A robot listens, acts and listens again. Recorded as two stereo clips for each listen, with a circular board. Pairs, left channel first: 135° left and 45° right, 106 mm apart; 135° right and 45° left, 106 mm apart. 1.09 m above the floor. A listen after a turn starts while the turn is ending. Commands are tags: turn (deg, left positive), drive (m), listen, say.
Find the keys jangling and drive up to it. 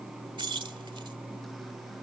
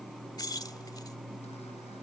<turn deg="-85"/>
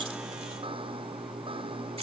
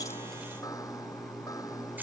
<listen/>
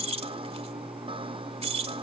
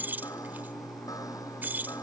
<turn deg="-30"/>
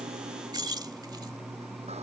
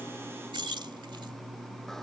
<drive m="1.0"/>
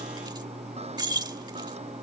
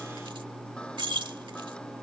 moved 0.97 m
<drive m="1.0"/>
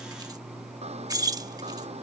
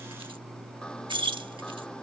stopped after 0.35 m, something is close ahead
<turn deg="10"/>
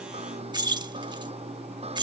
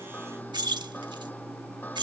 <say>I am next to the keys jangling.</say>